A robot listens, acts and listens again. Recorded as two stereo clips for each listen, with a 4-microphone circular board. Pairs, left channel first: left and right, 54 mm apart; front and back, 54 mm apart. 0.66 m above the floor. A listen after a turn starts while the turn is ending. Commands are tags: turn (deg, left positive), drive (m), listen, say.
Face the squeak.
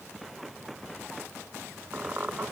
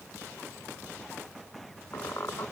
<turn deg="-35"/>
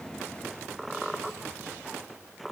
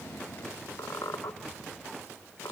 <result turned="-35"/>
<say>Facing the squeak.</say>